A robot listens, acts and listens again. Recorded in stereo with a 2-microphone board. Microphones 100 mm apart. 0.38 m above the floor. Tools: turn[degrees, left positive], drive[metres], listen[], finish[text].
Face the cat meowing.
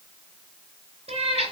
Action: turn[-90]
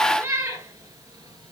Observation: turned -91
Thought: So it is at 30° right.
Action: turn[-30]
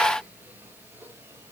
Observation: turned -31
Action: listen[]
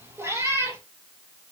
Thought: The cat meowing is now 30° right.
Action: turn[-30]
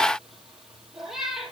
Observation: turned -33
Action: finish[Facing the cat meowing.]